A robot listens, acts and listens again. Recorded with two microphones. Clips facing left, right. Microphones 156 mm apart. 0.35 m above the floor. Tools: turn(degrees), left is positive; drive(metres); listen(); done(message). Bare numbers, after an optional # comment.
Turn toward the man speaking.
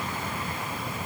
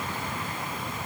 listen()
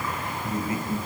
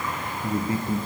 # The man speaking: about 30° right or 150° right.
turn(-30)
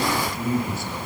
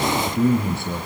# So it is at 120° right.
turn(-120)
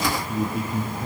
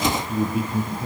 done("Facing the man speaking.")